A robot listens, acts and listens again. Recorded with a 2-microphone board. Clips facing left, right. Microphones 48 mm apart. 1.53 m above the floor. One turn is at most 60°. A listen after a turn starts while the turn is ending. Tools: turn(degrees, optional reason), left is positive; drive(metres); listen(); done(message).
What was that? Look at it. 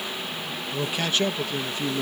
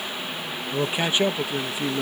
turn(degrees=-30)
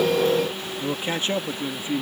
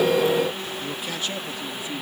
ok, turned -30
turn(degrees=35, reason="So it is at 35° left.")
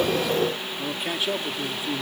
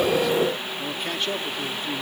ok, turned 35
turn(degrees=10, reason="The man speaking is now 10° left.")
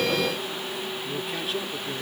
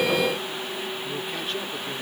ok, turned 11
listen()
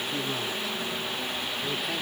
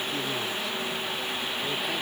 listen()
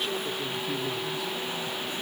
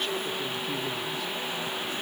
done("I heard a man speaking from this way, but can't make it out now.")